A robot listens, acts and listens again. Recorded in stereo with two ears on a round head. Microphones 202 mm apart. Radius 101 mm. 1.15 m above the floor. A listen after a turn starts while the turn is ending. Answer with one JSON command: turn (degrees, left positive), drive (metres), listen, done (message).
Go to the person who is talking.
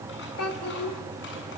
{"turn": 90}
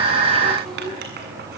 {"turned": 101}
{"turn": -10}
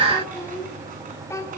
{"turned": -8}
{"turn": 15}
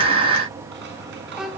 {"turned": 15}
{"drive": 1.0}
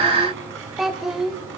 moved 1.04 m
{"drive": 1.0}
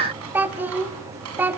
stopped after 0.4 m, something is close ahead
{"turn": -10}
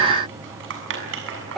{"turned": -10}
{"done": "Arrived at the child speaking, straight ahead."}